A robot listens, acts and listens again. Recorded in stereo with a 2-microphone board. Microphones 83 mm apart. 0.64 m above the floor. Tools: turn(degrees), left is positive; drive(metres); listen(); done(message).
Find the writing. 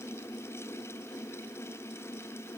listen()
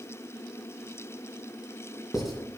turn(degrees=-30)
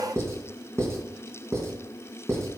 turn(degrees=-145)
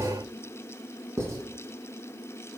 turn(degrees=-35)
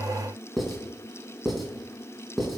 done("Found it: writing, straight ahead.")